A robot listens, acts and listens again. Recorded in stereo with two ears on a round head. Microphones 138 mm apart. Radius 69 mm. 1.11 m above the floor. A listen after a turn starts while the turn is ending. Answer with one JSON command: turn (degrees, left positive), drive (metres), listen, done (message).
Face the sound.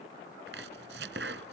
{"turn": -90}
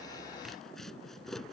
{"done": "Facing the chopping."}